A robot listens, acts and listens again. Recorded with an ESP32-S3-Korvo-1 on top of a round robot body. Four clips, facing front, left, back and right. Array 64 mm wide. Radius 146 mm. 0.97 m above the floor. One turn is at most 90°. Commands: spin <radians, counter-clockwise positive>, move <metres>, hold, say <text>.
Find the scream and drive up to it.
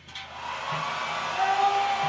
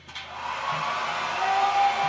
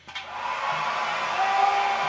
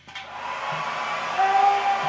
spin -1.57
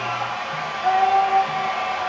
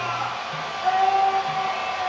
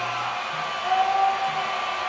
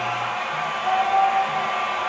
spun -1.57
spin 0.17
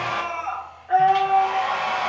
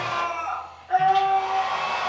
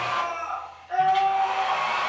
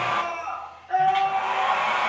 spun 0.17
move 1.0
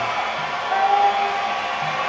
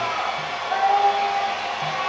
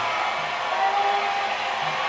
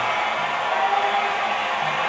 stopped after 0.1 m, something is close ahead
say Blocked. The scream is further on, straight ahead.